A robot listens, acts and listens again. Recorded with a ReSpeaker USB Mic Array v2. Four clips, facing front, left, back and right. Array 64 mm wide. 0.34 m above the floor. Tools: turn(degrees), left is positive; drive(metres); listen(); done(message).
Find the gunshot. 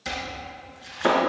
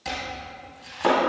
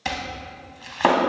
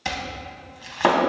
listen()
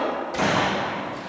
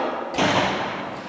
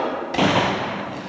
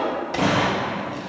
turn(degrees=160)
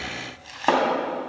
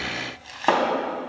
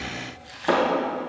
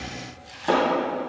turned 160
done("Facing where the gunshot came from. I can't hear it now.")